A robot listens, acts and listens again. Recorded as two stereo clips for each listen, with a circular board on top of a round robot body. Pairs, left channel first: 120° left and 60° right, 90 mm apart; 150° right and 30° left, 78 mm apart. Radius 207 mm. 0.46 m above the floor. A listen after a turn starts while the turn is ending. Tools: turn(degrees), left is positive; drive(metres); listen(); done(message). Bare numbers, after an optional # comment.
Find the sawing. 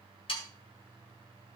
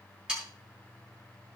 # The sawing: 110° left.
turn(110)
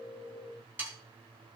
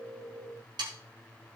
# The sawing is now 10° left.
turn(10)
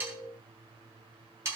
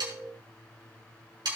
done("Found it: sawing, straight ahead, 2 to 4 m away.")